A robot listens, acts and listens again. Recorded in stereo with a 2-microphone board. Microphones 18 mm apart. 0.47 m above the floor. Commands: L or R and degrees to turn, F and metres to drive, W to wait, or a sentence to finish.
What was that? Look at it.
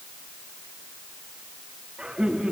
R75
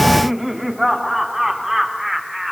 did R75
R15
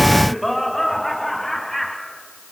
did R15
L10
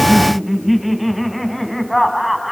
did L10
Facing the laughter, 2 to 4 m away.